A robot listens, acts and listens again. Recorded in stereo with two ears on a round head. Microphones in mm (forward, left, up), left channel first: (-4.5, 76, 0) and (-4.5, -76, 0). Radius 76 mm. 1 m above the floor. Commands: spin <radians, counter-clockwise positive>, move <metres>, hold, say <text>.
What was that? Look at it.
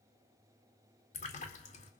spin 0.70
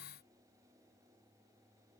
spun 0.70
hold
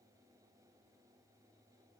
say I heard a splash, but can't make it out now. It was about straight ahead or 100° left.